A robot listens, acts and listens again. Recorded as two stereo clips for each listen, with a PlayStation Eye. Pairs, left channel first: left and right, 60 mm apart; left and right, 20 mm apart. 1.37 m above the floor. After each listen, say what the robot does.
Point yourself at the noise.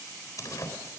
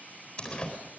Turn 70° left.
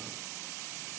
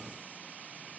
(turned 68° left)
Keep listening.
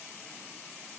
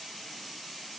I heard a door slam, but can't make it out now. It was about straight ahead or 40° left.